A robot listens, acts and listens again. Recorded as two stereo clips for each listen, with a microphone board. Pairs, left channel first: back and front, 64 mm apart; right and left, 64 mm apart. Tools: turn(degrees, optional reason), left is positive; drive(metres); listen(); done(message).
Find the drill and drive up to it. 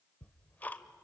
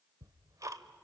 listen()
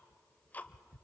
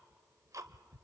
listen()
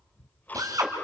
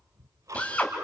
turn(degrees=-20, reason="The drill: 20° right.")
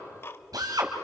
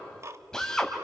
turn(degrees=-10, reason="The drill is now 10° right.")
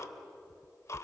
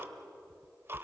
listen()
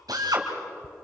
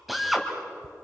drive(metres=1.0)
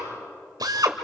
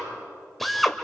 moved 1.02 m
drive(metres=1.0)
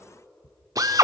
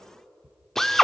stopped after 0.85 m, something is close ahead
done("Arrived at the drill, straight ahead.")